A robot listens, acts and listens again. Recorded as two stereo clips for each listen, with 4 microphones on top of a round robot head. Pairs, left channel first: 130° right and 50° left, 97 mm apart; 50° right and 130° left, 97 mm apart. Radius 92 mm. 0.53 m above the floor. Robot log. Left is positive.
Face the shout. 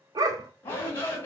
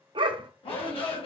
note: The shout: 70° right.
cmd yaw -70
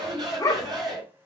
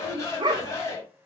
end: Found it: a shout, straight ahead, over 4 m away.